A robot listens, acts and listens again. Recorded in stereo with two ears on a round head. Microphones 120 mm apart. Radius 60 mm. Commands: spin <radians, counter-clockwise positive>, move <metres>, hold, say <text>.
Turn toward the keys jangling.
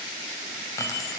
spin 0.44
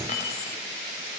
spin 2.09
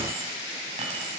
hold
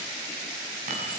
spin -0.96
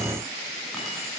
hold
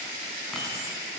say Facing the keys jangling.